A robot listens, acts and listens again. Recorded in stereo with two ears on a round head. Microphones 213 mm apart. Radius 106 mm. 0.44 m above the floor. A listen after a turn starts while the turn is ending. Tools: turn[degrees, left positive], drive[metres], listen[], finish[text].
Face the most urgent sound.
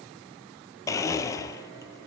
Action: listen[]
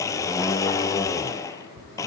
Action: listen[]
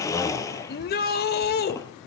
Thought: The shout: about 40° left or 140° left.
Action: turn[40]
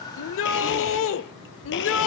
Thought: So it is at 90° left.
Action: turn[90]
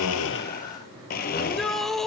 Action: finish[Facing the shout, 1 to 2 m away.]